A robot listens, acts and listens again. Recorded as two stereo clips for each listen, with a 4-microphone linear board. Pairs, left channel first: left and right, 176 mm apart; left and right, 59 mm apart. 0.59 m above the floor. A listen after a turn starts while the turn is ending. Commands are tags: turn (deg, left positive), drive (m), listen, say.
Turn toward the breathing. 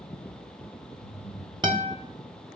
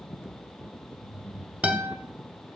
<turn deg="40"/>
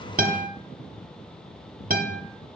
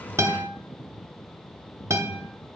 <turn deg="100"/>
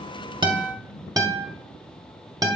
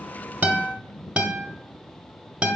<listen/>
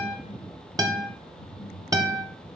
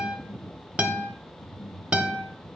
<turn deg="15"/>
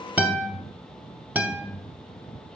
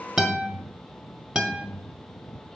<say>Facing the breathing.</say>